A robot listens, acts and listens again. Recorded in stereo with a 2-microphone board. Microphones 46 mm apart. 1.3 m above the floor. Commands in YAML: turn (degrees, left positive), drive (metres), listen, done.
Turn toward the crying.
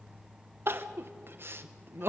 turn: -55
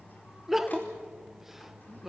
done: "Found it: crying, straight ahead."